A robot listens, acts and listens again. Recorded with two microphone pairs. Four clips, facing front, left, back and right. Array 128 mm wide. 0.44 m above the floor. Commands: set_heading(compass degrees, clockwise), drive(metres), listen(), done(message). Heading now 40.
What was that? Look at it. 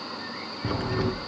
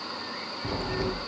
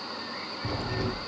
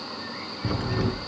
set_heading(65)
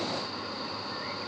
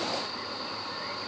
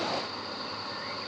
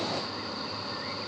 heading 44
set_heading(64)
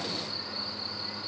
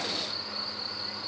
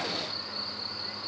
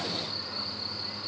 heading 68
done("Facing where the crack came from. I can't hear it now.")